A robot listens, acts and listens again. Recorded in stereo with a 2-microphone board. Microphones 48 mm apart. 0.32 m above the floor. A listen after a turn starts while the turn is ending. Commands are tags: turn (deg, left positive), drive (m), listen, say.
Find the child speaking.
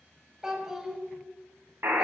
<turn deg="-30"/>
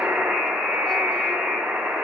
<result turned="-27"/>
<listen/>
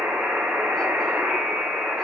<listen/>
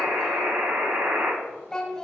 <turn deg="15"/>
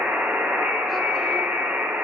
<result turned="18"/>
<listen/>
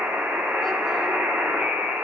<listen/>
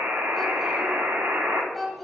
<say>Found it: a child speaking, straight ahead.</say>